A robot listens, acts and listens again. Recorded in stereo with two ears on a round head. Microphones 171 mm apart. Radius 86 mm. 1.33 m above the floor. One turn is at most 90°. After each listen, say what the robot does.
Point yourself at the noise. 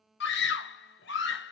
Turn 65° left.
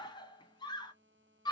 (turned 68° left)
Turn 25° left.
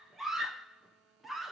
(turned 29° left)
Facing the scream.